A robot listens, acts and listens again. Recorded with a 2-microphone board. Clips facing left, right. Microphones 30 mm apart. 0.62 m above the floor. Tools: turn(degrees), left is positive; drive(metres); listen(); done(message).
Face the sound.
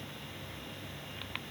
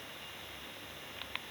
listen()
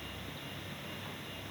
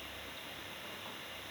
listen()
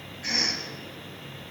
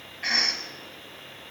turn(degrees=-55)
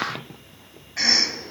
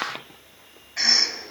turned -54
done("Facing the cough, 2 to 4 m away.")